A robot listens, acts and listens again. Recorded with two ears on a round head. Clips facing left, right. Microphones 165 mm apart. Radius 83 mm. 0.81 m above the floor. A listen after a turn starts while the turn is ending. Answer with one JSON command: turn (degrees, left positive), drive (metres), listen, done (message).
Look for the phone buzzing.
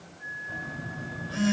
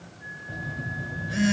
{"turn": -20}
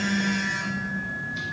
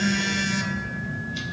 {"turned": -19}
{"turn": -140}
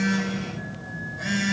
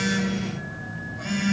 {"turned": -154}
{"turn": 15}
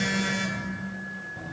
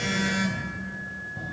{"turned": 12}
{"done": "Facing the phone buzzing."}